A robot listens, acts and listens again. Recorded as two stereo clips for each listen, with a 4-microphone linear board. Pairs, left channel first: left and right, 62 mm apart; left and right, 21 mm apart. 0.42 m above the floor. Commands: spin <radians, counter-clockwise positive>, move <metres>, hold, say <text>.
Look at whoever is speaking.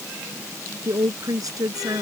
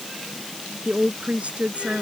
spin -1.57
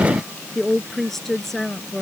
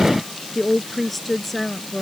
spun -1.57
say Found it: a woman speaking, straight ahead.